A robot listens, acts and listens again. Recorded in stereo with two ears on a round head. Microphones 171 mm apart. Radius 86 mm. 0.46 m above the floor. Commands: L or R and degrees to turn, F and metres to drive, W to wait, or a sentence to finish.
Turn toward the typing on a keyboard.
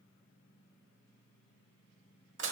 W
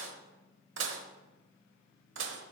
W
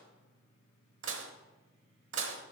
I can't make out typing on a keyboard, only dishes clattering.